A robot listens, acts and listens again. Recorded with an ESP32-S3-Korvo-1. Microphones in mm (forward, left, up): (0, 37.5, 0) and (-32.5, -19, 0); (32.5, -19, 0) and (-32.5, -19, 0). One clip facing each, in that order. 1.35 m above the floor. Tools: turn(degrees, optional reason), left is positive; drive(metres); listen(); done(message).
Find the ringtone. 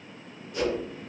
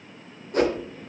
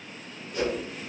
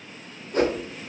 listen()
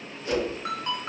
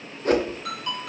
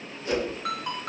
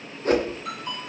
done("Facing the ringtone, 2 to 4 m away.")